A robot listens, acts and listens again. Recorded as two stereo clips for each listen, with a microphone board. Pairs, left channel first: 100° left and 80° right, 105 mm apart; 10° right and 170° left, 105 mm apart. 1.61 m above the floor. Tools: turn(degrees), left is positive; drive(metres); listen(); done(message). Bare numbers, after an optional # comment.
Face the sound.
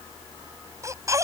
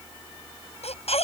# The baby crying: 20° right.
turn(-20)
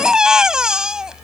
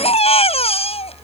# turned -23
done("Found it: a baby crying, straight ahead.")